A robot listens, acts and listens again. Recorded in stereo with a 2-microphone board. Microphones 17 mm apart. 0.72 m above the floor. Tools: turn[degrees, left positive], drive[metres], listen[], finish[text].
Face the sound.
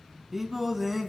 Action: turn[-30]
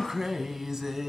Thought: So it is at 150° right.
Action: turn[-150]
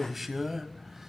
Thought: The singing is now 20° right.
Action: turn[-20]
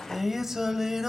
Thought: The singing is now 30° right.
Action: turn[-30]
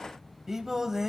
Thought: The singing is now 30° right.
Action: turn[-30]
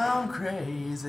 Action: finish[Facing the singing, 1 to 2 m away.]